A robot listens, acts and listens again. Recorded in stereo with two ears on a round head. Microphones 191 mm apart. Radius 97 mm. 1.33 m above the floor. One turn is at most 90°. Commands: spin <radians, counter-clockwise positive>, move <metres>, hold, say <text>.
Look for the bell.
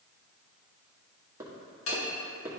spin 1.13
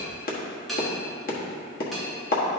say Facing the bell.